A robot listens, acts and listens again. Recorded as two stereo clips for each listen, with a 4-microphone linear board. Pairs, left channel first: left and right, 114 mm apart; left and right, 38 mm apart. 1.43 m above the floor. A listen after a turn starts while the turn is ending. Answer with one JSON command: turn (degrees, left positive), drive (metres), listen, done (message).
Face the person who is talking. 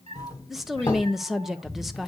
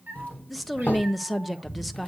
{"turn": -30}
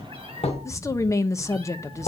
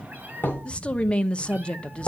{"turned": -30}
{"turn": 25}
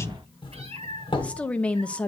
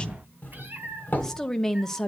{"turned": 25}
{"turn": 10}
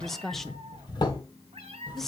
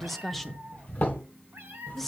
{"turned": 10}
{"done": "Facing the woman speaking, under 1 m away."}